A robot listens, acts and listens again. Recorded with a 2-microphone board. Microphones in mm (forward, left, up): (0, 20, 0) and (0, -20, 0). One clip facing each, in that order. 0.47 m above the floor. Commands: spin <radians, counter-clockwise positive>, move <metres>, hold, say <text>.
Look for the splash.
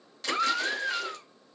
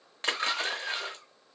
spin -0.70
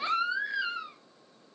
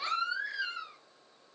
hold
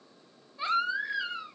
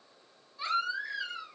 say I heard a splash, but can't make it out now. It was about straight ahead or 100° right.